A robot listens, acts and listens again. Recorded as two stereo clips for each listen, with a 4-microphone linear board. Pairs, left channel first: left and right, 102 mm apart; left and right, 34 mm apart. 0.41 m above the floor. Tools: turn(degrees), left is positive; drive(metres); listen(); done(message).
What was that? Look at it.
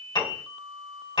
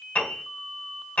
turn(degrees=55)
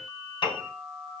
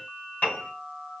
turn(degrees=65)
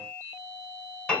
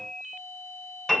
turn(degrees=10)
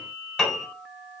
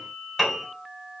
done("Found it: a piano, straight ahead, 2 to 4 m away.")